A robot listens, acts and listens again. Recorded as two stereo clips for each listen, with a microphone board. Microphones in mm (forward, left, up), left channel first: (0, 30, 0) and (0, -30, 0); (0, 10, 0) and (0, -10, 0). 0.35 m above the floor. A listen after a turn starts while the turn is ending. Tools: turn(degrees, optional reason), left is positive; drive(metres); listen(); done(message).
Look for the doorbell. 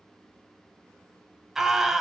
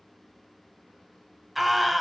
listen()
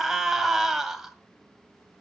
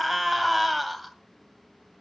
listen()
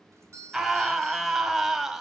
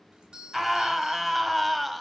turn(degrees=-55, reason="The doorbell: about 55° right or 125° right.")
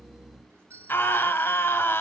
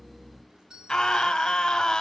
turn(degrees=-55, reason="So it is at 55° right.")
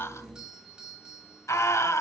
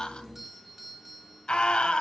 turn(degrees=-15, reason="The doorbell is now 15° right.")
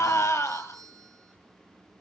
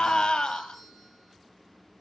done("Facing the doorbell, 2 to 4 m away.")